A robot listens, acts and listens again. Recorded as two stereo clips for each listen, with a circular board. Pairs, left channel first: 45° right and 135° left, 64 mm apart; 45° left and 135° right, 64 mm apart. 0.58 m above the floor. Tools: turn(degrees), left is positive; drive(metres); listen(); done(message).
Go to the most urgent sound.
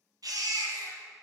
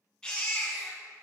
turn(degrees=120)
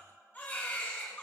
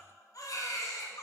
turn(degrees=20)
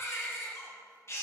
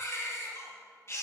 drive(metres=1.0)
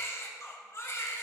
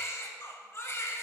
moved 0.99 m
drive(metres=1.0)
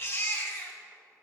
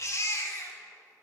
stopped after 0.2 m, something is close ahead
done("I am next to the baby crying.")